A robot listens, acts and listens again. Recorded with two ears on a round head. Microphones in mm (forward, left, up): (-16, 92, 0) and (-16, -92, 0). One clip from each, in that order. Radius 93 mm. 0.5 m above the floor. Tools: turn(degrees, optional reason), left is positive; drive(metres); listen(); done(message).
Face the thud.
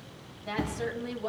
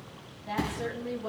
turn(degrees=-55, reason="The thud: about 55° right or 125° right.")
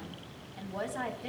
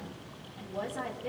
listen()
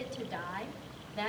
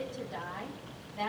done("I heard a thud, but can't make it out now. It was about straight ahead or 70° right.")